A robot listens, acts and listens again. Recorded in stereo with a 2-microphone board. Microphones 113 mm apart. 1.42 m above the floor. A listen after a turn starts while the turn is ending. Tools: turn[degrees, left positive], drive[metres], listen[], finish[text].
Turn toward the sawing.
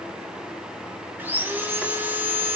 Thought: The sawing: about 15° right or 165° right.
Action: turn[-15]
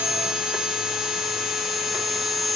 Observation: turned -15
Action: finish[Facing the sawing, 2 to 4 m away.]